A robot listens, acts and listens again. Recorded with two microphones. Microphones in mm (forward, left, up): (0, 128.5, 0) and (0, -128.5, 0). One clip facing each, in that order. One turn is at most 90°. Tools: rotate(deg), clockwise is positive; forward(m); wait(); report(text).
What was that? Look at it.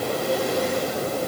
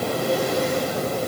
wait()
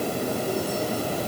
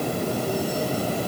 wait()
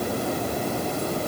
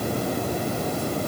report("I can't make out anything to turn to.")